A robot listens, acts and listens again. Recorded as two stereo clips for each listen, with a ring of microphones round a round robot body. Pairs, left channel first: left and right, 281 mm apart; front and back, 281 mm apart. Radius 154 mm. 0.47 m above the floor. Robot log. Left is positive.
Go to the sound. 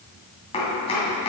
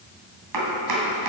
note: The chopping: 165° left.
cmd yaw +165
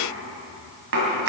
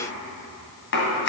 note: The chopping is now 45° right.
cmd yaw -45
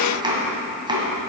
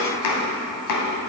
note: The chopping is now 15° right.
cmd yaw -15
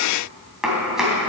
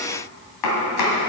cmd fwd 1.0
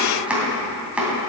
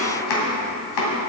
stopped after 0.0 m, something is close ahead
end: Something is in my way. I am facing the chopping but have not reached it.